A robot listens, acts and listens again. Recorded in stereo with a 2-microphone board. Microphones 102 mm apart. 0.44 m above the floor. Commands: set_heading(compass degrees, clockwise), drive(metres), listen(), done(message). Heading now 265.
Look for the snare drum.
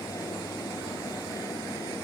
listen()
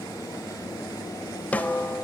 set_heading(250)
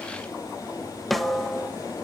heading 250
done("Found it: a snare drum, straight ahead.")